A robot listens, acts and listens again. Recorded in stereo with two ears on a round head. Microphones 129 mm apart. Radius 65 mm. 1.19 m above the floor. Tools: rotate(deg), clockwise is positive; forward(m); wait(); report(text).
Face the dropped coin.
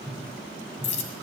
rotate(-50)
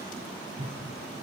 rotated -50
wait()
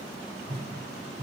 report("I heard a dropped coin, but can't make it out now. It was about straight ahead or 80° left.")